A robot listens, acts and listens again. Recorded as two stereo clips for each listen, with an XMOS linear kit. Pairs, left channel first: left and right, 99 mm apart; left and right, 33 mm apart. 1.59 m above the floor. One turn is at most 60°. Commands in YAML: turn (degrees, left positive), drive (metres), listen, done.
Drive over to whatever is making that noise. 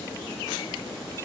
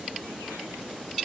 listen: true
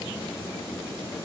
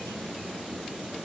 listen: true
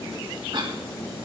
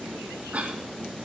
turn: -55
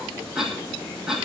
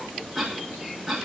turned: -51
drive: 1.0
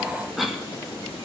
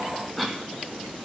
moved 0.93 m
drive: 1.0
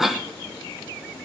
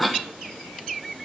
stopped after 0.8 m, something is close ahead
done: "I am next to the cough."